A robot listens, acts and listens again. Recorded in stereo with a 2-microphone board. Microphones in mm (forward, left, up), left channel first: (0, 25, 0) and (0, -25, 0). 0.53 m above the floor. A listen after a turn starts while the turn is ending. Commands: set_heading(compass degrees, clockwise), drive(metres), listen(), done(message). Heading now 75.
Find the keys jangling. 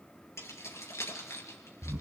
set_heading(0)
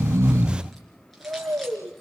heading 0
listen()
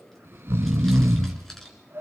done("Facing the keys jangling, over 4 m away.")